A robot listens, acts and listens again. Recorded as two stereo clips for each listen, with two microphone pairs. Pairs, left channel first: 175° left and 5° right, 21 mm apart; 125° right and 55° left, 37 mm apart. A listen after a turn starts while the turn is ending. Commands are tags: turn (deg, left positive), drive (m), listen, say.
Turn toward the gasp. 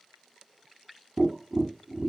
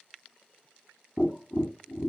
<listen/>
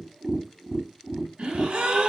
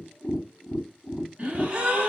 <say>Facing the gasp, 1 to 2 m away.</say>